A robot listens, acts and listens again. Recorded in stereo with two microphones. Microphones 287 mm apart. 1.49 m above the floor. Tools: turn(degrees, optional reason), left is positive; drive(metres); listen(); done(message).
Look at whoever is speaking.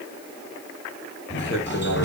turn(degrees=45, reason="The man speaking: about 45° left or 135° left.")
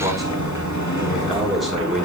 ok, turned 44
done("Facing the man speaking.")